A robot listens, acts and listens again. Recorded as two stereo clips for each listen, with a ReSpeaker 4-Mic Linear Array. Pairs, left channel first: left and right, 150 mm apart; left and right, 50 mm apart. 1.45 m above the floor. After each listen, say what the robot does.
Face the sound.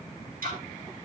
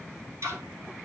Turn 65° right.
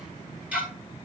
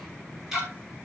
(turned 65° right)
Turn 10° right.
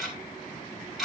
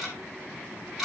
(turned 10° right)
Facing the ticking.